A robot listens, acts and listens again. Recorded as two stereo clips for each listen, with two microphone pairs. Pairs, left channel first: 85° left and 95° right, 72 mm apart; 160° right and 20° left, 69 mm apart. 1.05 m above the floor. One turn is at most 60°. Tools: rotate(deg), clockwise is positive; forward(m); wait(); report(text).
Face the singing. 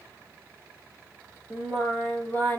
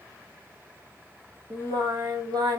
rotate(-25)
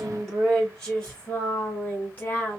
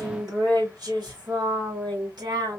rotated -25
rotate(-20)
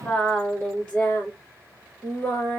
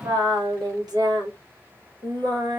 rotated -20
rotate(-20)
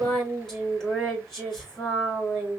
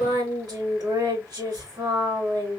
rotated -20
report("Found it: singing, straight ahead.")